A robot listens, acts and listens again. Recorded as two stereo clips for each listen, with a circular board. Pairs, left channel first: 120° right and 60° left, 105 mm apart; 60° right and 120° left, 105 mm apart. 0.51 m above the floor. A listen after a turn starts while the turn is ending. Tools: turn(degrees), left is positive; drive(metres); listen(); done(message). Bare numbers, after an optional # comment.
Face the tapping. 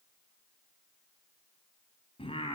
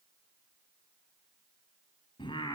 listen()
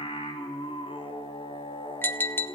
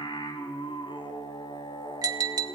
# The tapping: 170° left.
turn(170)
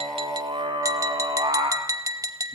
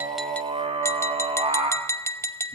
done("Found it: tapping, straight ahead, under 1 m away.")